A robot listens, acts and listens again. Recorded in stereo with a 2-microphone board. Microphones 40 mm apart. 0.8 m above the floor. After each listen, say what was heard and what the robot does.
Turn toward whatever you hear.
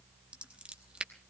The scissors: about 30° right or 150° right. Turn 30° right.
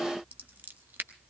So it is at 120° right. Turn 120° right.
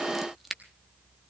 Found it: scissors, straight ahead.